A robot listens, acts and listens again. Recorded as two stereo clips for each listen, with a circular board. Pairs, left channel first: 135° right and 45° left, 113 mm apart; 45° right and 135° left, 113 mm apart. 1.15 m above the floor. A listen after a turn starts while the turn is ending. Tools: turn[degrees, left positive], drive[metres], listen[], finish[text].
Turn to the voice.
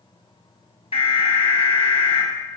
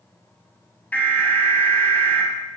Action: listen[]
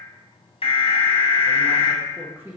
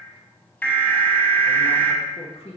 Thought: The woman speaking: 30° right.
Action: turn[-30]
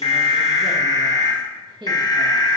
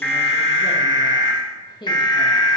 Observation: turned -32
Action: finish[Found it: a woman speaking, straight ahead.]